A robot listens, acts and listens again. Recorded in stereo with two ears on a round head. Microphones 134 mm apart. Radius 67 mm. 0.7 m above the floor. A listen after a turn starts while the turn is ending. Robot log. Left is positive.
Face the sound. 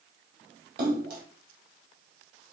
note: The splash: about 60° right or 120° right.
cmd yaw -60
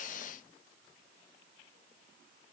cmd idle
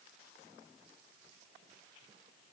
end: I heard a splash, but can't make it out now. It was about straight ahead or 60° right.